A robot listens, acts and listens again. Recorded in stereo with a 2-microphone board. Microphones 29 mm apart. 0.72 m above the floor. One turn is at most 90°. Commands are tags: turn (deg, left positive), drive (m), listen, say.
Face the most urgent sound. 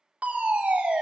<turn deg="-55"/>
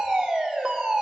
<turn deg="-20"/>
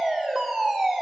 <say>Facing the fire alarm.</say>